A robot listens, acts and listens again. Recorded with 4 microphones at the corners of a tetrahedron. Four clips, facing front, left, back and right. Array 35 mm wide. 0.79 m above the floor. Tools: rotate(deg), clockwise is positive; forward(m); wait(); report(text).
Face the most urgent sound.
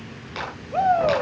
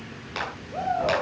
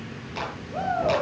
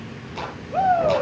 rotate(40)
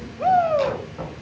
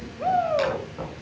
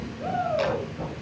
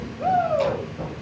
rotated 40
report("Facing the shout.")